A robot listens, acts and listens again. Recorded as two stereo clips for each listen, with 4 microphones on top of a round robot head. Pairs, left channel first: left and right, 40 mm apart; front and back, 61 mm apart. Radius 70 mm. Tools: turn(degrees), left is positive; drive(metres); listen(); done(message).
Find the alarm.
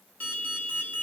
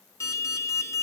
turn(degrees=35)
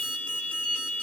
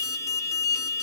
turn(degrees=30)
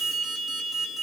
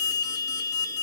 done("Facing the alarm.")